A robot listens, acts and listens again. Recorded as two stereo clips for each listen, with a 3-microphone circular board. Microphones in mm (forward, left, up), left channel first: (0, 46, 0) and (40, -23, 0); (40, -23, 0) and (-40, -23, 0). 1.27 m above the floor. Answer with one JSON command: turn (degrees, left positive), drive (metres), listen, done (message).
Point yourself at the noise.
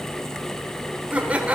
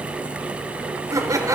{"turn": -135}
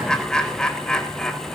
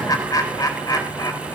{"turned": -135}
{"turn": 40}
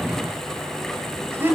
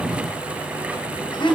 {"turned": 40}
{"done": "Found it: laughter, straight ahead."}